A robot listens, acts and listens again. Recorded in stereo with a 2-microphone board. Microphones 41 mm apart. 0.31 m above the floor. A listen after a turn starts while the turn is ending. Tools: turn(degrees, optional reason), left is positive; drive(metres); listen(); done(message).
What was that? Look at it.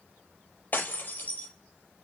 turn(degrees=40, reason="The breaking glass: about 40° left or 140° left.")
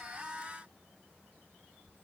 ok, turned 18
listen()
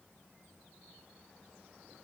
done("I heard breaking glass, but can't make it out now. It was about 20° left or 120° left.")